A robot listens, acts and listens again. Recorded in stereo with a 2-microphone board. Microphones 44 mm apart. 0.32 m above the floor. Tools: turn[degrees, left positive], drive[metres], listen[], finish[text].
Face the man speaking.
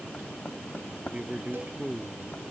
Thought: The man speaking: about 25° right or 155° right.
Action: turn[-25]
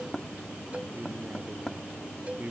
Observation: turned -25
Thought: The man speaking: about 40° right or 140° right.
Action: turn[-40]
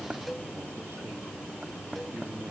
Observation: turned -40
Action: listen[]
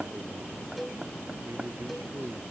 Action: listen[]
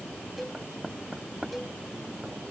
Action: finish[I heard a man speaking, but can't make it out now. It was about straight ahead or 100° right.]